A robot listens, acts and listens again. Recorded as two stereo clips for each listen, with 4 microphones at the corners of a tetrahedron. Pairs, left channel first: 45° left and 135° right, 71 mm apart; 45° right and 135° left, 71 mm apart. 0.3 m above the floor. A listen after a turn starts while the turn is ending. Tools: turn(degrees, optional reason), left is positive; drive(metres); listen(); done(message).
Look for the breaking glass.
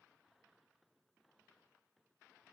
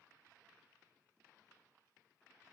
listen()
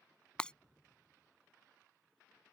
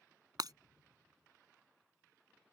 turn(degrees=120, reason="The breaking glass: 120° left.")
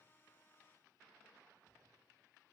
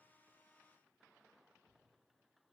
done("I heard breaking glass from this way, but can't make it out now.")